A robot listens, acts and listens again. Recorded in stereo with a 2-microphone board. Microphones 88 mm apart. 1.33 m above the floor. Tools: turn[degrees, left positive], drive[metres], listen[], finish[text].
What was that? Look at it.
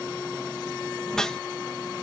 Action: turn[30]
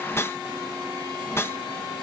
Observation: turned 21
Thought: So it is at 155° left.
Action: turn[155]
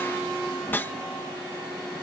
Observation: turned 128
Thought: The whoosh is now 25° left.
Action: turn[25]
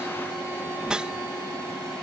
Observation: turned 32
Thought: The whoosh is now 10° right.
Action: turn[-10]
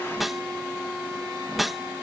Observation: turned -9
Action: finish[Facing the whoosh.]